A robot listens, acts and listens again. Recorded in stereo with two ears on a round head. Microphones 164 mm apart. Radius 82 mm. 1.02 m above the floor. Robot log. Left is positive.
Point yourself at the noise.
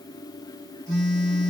cmd yaw +30
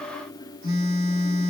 note: So it is at 25° right.
cmd yaw -25
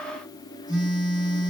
end: Found it: a phone buzzing, straight ahead, 2 to 4 m away.